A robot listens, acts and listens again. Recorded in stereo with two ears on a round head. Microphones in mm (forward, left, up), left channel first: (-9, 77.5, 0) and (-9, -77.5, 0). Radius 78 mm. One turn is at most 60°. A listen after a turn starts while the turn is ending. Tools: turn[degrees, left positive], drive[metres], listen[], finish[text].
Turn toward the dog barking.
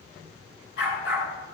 Thought: The dog barking: about 70° left or 110° left.
Action: turn[60]
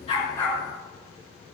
Action: listen[]
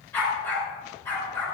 Thought: So it is at 10° left.
Action: turn[10]
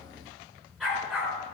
Action: finish[Facing the dog barking, over 4 m away.]